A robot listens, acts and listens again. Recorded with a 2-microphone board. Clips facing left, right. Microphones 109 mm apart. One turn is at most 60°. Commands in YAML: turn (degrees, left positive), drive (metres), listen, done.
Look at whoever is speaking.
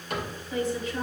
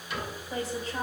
turn: -40
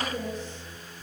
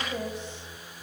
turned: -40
turn: -60
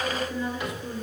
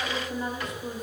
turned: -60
turn: -45
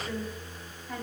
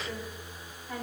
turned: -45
done: "Found it: a woman speaking, straight ahead."